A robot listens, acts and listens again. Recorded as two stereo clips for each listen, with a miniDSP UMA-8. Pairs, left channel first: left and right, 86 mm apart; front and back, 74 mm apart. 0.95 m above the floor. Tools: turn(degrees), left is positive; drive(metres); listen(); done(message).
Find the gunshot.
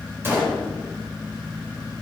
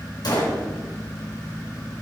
turn(degrees=-25)
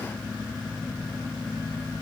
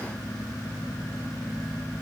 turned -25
done("I heard a gunshot from this way, but can't make it out now.")